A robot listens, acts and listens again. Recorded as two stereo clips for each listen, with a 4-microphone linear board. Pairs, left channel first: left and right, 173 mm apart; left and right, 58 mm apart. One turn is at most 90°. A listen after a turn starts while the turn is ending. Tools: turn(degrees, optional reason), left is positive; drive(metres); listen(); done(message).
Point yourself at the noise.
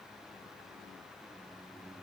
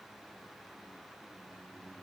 listen()
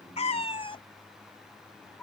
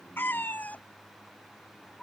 turn(degrees=30)
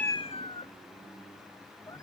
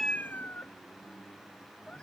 turn(degrees=20, reason="The cat meowing: about 20° left or 160° left.")
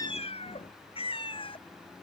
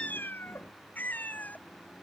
turn(degrees=90, reason="So it is at 150° left.")
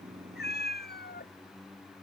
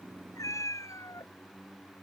turn(degrees=70, reason="The cat meowing is now 70° left.")
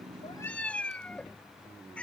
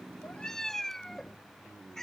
done("Found it: a cat meowing, straight ahead.")